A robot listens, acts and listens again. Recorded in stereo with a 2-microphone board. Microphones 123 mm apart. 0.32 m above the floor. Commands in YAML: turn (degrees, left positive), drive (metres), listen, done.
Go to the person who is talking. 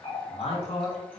turn: 60
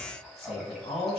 turn: 55
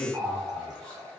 turn: 15
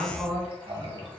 drive: 1.0
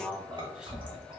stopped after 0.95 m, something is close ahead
done: "Arrived at the man speaking, straight ahead."